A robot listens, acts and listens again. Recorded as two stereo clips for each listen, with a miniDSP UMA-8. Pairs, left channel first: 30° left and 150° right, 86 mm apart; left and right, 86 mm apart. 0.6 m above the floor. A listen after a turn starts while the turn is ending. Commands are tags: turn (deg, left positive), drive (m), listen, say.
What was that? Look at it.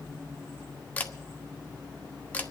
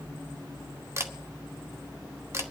<turn deg="-40"/>
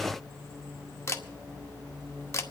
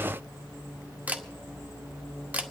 <turn deg="-20"/>
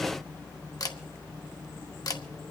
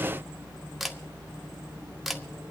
<say>Found it: a camera shutter, straight ahead.</say>